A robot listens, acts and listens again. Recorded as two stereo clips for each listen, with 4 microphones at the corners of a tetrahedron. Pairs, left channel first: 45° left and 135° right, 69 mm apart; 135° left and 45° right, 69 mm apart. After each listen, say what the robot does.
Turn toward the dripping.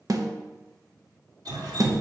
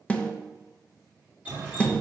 Turn 115° right.
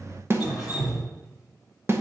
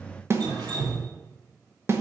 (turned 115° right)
Turn 50° right.
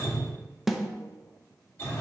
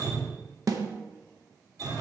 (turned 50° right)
Turn 10° right.
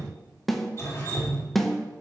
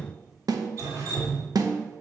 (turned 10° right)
Facing the dripping.